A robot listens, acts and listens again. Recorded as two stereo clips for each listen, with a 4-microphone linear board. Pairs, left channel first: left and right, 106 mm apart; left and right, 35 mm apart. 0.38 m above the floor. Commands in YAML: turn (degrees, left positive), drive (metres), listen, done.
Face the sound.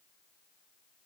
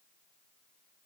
listen: true
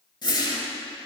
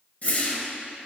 turn: 45
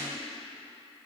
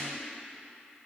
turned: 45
listen: true
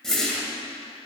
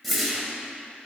done: "Found it: a whoosh, straight ahead."